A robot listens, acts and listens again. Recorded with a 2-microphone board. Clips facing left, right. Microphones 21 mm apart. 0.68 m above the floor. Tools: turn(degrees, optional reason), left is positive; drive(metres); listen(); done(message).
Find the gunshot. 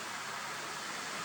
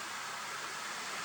listen()
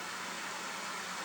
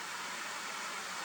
listen()
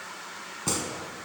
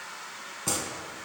turn(degrees=30)
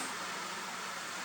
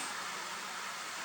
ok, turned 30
listen()
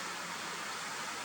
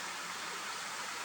done("I heard a gunshot, but can't make it out now. It was about 25° right or 145° left.")